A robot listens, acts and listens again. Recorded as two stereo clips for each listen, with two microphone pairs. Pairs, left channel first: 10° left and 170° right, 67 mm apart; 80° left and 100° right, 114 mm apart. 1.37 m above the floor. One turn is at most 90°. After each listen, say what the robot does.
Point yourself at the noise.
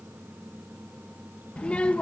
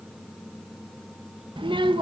Turn 60° right.
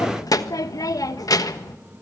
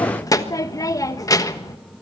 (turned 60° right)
Turn 25° left.
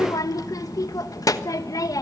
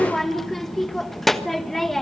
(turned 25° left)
Turn 10° right.
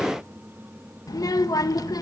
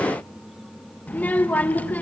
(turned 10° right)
Facing the child speaking.